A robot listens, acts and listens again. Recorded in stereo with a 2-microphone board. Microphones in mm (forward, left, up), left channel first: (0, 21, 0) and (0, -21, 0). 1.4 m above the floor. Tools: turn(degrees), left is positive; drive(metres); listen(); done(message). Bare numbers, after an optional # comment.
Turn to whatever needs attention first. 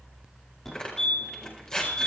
turn(30)
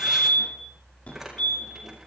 # So it is at 145° left.
turn(145)
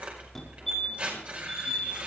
done("Found it: a fire alarm, straight ahead.")